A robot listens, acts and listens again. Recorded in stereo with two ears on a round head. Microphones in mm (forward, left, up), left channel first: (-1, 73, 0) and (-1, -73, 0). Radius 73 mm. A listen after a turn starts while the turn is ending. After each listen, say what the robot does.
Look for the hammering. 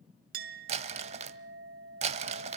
Keep listening.
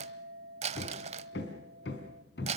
Turn 90° left.
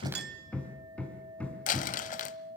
Turn 10° left.
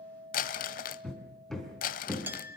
Facing the hammering, 2 to 4 m away.